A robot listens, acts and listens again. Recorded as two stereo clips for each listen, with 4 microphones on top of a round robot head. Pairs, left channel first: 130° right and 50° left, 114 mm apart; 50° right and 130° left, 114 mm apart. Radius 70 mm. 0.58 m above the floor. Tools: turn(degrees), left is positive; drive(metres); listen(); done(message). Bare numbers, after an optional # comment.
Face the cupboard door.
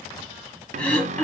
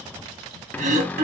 # The cupboard door: 25° left.
turn(25)
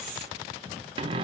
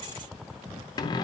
done("Found it: a cupboard door, straight ahead, under 1 m away.")